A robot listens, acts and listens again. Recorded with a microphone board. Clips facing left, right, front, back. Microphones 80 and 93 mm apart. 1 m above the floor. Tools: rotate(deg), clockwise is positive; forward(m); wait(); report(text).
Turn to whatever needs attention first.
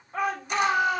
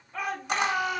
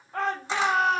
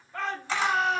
rotate(-35)
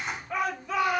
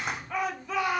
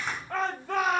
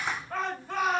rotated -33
report("Found it: a shout, straight ahead, 2 to 4 m away.")